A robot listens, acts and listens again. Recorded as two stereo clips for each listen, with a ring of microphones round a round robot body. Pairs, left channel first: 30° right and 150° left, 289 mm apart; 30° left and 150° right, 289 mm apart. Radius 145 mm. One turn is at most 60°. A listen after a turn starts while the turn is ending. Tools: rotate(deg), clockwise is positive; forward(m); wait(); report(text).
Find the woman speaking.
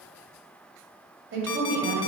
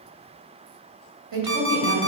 rotate(60)
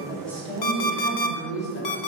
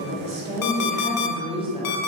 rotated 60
rotate(60)
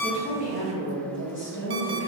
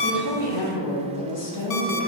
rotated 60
rotate(-20)
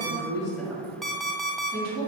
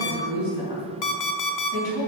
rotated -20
rotate(-10)
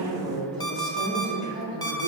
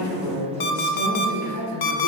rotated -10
report("Facing the woman speaking, 2 to 4 m away.")